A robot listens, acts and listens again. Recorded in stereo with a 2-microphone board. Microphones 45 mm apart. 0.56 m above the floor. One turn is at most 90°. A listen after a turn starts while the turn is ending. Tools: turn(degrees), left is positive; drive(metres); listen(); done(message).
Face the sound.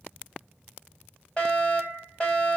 turn(degrees=20)
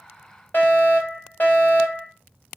turn(degrees=90)
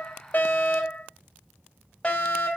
turn(degrees=25)
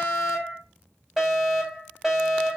done("Facing the fire alarm, over 4 m away.")